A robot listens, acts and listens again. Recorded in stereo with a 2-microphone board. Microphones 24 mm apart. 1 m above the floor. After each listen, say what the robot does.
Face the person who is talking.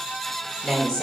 Turn 25° left.
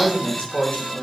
Turn 130° left.
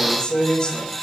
Turn 40° left.
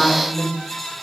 Facing the woman speaking, over 4 m away.